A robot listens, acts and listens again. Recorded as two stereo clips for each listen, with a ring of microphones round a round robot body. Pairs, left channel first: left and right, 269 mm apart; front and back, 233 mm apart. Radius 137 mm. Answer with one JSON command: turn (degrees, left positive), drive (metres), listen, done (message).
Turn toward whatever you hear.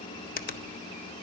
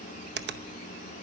{"turn": 145}
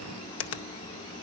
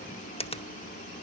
{"turn": 65}
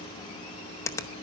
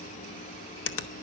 {"turn": 10}
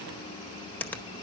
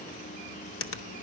{"done": "Found it: a finger snap, straight ahead."}